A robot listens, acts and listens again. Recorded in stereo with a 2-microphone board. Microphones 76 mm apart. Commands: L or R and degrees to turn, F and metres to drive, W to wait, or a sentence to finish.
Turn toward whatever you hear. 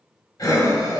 L55
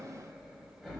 Facing the breathing.